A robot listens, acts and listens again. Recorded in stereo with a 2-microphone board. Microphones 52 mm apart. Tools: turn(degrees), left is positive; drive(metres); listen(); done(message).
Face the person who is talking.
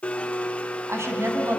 turn(degrees=-60)
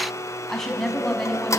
turn(degrees=10)
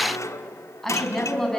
turn(degrees=10)
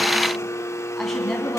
turn(degrees=10)
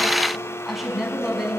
done("Facing the woman speaking, over 4 m away.")